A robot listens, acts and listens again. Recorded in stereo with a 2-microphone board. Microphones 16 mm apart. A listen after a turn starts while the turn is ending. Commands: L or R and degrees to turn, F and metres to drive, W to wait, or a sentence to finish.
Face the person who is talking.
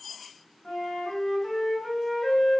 W
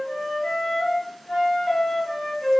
W
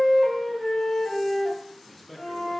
L30
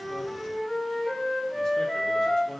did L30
W
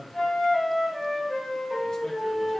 L140
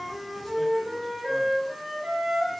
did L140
W
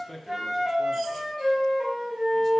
L10
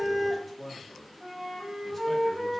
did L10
Facing the man speaking, under 1 m away.